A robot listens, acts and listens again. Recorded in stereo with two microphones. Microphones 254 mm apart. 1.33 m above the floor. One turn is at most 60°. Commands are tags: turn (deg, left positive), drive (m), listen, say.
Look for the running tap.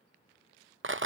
<listen/>
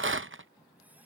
<turn deg="-30"/>
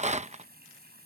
<turn deg="-60"/>
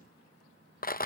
<turn deg="-60"/>
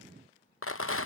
<turn deg="-10"/>
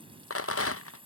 <turn deg="-20"/>
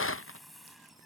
<say>Found it: a running tap, straight ahead.</say>